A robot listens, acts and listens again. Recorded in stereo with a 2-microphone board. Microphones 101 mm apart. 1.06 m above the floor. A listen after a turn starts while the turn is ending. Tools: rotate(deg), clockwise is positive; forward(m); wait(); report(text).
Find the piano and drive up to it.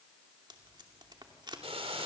wait()
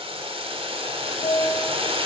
rotate(-90)
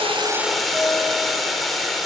wait()
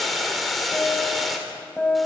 forward(1.0)
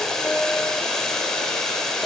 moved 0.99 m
wait()
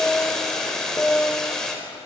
forward(1.0)
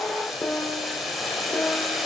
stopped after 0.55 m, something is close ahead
rotate(-15)
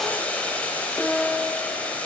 report("Arrived at the piano, straight ahead.")